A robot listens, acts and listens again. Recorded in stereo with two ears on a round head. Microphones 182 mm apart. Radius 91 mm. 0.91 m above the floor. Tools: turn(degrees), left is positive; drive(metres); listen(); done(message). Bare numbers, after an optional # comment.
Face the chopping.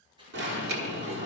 # The chopping: about 25° right or 155° right.
turn(-25)
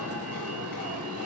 listen()
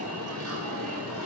listen()
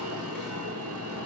done("I heard chopping, but can't make it out now. It was about straight ahead or 130° right.")